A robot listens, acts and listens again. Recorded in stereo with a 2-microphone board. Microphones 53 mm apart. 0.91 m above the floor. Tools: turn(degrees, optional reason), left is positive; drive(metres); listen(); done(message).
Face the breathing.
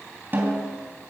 listen()
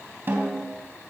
listen()
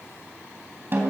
done("I can't make out breathing to turn to.")